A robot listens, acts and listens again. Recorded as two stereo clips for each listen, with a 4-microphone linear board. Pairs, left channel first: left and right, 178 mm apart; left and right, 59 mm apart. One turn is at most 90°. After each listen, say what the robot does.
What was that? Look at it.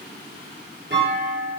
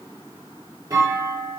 Turn 70° right.
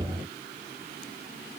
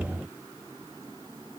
Keep listening.
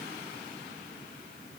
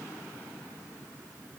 I heard a clunk, but can't make it out now. It was about straight ahead or 40° right.